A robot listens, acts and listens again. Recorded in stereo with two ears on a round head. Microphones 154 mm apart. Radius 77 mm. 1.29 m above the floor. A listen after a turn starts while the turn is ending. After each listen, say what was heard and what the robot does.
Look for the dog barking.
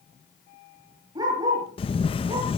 The dog barking: about 25° right or 155° right. Turn 25° right.
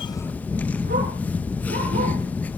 Keep listening.
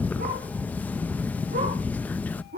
So it is at 125° right. Turn 125° right.
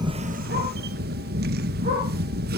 Keep listening.
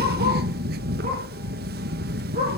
Keep listening.
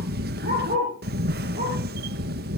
The dog barking is now 45° right. Turn 45° right.
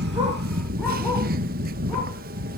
Keep listening.
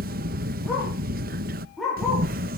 Found it: a dog barking, straight ahead.